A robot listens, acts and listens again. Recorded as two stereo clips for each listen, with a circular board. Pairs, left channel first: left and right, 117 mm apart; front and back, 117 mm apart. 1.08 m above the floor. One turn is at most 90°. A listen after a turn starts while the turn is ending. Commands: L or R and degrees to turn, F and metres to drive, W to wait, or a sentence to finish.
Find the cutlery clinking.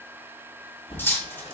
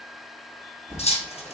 L20
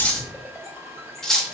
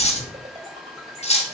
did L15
Facing the cutlery clinking.